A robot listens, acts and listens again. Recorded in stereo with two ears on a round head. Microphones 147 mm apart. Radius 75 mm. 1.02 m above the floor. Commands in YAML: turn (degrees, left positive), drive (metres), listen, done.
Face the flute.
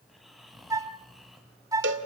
turn: -20
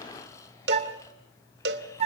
turn: -140
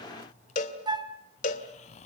turn: -25
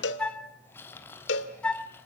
done: "Facing the flute, 1 to 2 m away."